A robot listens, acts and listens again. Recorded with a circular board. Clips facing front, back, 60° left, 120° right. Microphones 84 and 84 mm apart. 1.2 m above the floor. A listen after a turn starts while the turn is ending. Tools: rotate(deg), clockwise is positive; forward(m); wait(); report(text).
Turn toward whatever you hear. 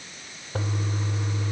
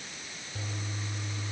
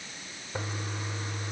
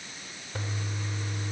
rotate(10)
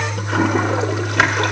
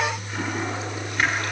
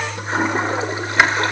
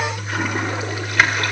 report("Facing the toilet flushing.")